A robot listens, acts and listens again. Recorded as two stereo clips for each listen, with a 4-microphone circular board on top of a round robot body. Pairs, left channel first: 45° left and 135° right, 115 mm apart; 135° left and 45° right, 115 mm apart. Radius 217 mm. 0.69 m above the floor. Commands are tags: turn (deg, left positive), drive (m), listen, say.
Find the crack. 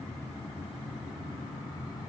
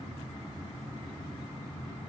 <listen/>
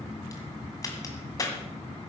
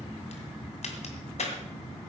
<turn deg="105"/>
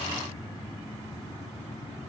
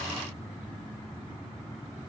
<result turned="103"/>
<say>Facing where the crack came from. I can't hear it now.</say>